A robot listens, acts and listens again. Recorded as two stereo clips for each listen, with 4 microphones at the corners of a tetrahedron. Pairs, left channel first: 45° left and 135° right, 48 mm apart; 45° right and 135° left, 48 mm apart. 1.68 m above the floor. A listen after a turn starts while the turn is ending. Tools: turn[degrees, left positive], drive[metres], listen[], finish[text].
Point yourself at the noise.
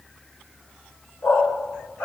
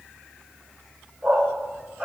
Thought: The dog barking: 55° left.
Action: turn[55]
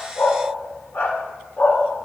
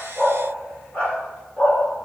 Thought: The dog barking is now 10° left.
Action: turn[10]
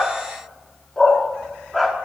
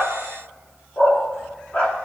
Thought: The dog barking is now 45° right.
Action: turn[-45]
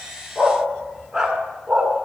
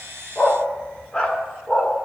Thought: The dog barking is now 70° right.
Action: turn[-70]
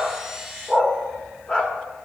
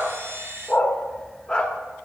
Action: finish[Found it: a dog barking, straight ahead.]